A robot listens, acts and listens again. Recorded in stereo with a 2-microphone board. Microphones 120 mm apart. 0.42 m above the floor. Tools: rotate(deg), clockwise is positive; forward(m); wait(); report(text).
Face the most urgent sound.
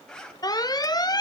rotate(-35)
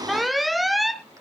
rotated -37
report("Facing the alarm.")